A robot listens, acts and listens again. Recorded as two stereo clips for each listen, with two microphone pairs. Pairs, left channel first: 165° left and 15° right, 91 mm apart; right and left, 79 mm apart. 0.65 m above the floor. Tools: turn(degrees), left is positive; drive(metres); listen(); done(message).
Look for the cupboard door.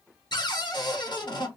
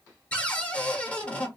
turn(degrees=-160)
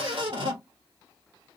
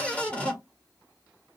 turn(degrees=-20)
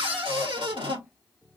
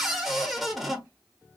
done("Found it: a cupboard door, straight ahead, 1 to 2 m away.")